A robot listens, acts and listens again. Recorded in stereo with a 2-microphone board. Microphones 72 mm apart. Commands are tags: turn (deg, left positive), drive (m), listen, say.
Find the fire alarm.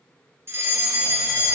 <turn deg="-35"/>
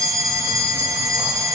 <turn deg="-95"/>
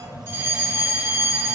<turn deg="-40"/>
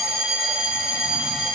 <turn deg="-10"/>
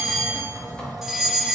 <say>Found it: a fire alarm, straight ahead, 1 to 2 m away.</say>